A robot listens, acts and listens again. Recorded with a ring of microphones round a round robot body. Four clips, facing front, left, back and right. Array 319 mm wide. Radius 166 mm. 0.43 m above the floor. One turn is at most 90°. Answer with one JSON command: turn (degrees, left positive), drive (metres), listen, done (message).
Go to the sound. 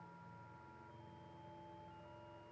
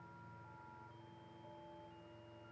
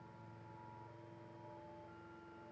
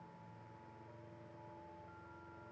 {"listen": true}
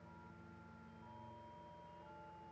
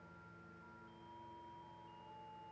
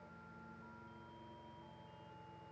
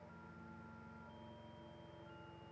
{"listen": true}
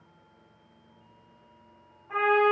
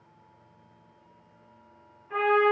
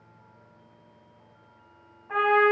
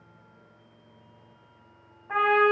{"turn": -90}
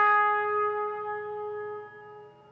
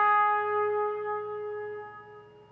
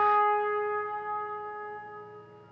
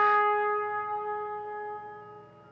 {"drive": 1.0}
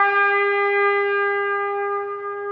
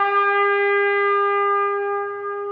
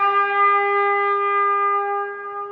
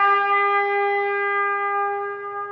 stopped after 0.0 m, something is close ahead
{"turn": -10}
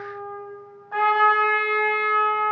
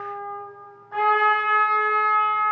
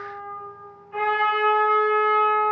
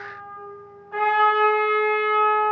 {"done": "Blocked. The trumpet is further on, straight ahead."}